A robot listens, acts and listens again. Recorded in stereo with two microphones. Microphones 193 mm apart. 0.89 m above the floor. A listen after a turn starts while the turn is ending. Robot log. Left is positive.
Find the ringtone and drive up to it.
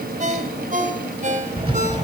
note: The ringtone: about 40° right or 140° right.
cmd yaw -40
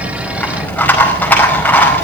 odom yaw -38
cmd idle
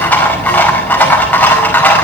cmd idle
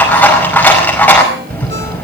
end: I heard a ringtone, but can't make it out now. It was about straight ahead or 100° right. I did not reach it.